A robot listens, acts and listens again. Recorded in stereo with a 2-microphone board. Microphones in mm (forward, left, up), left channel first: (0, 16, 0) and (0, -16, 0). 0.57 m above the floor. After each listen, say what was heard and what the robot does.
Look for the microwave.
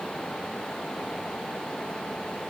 Keep listening.
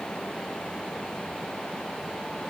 Keep listening.
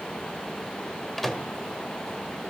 Turn 30° left.
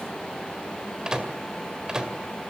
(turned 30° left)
So it is at 25° right. Turn 25° right.
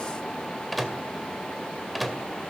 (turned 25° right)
Facing the microwave.